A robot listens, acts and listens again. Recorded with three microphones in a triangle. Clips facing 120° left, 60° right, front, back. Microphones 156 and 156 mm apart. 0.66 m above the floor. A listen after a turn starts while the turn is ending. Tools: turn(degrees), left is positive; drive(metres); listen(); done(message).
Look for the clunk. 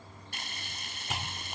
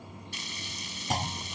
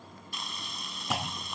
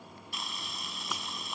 turn(degrees=-10)
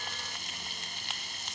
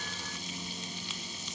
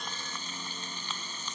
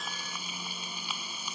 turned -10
done("Facing where the clunk came from. I can't hear it now.")